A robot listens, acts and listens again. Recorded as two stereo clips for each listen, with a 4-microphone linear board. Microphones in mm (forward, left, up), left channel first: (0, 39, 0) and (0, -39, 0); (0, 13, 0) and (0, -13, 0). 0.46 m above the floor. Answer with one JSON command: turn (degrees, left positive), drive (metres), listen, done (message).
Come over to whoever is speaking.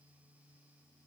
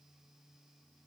{"listen": true}
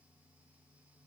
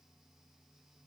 {"listen": true}
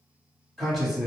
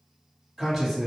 {"turn": 30}
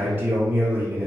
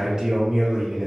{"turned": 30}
{"turn": -25}
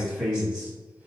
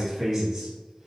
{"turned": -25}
{"turn": -10}
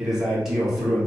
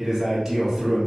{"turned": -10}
{"drive": 1.0}
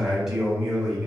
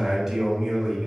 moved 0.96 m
{"drive": 1.0}
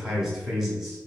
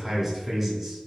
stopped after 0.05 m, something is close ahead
{"turn": -10}
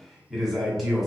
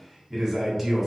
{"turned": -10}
{"done": "I am next to the man speaking."}